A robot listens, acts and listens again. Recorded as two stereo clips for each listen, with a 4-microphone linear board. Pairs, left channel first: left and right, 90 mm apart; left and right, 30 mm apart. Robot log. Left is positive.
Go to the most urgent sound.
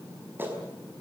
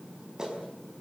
cmd idle
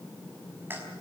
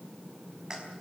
cmd idle
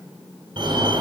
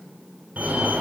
note: The fire alarm: about 60° right or 120° right.
cmd yaw -60
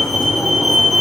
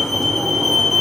cmd fwd 1.0
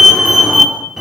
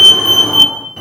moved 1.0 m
cmd fwd 1.0
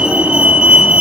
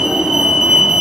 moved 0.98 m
note: The fire alarm is now 15° right.
cmd yaw -15
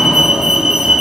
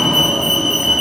cmd fwd 1.0
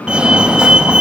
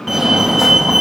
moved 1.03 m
note: The fire alarm is now 15° right.
cmd yaw -15
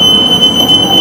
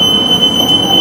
cmd fwd 1.0
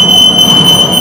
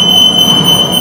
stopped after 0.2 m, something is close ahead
end: Arrived at the fire alarm, straight ahead.